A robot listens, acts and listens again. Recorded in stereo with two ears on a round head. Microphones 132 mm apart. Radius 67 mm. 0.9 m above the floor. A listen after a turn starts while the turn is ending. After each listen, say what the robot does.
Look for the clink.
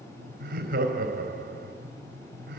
Keep listening.
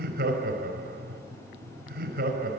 Keep listening.
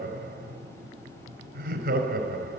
I can't make out a clink, only laughter.